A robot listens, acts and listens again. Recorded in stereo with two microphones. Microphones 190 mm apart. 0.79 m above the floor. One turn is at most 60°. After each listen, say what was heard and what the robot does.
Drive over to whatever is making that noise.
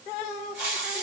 Turn 30° right.
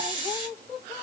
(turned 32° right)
So it is at 30° left. Turn 30° left.
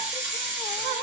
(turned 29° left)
Drive 1.0 m forward.
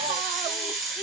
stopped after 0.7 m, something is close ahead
Arrived at the hiss, straight ahead.